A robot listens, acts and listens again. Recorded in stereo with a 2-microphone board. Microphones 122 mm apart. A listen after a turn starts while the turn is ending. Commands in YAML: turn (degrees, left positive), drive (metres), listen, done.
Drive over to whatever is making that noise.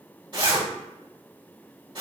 turn: -40
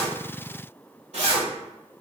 turn: -90
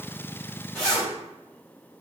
drive: 1.0
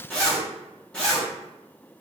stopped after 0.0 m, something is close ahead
turn: 10
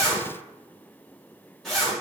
done: "Blocked. The zipper is further on, straight ahead."